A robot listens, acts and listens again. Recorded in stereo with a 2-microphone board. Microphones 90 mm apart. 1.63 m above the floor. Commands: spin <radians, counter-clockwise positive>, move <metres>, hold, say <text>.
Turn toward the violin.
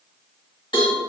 hold
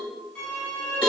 spin 0.52
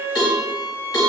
spin -0.26
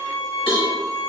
say Found it: a violin, straight ahead.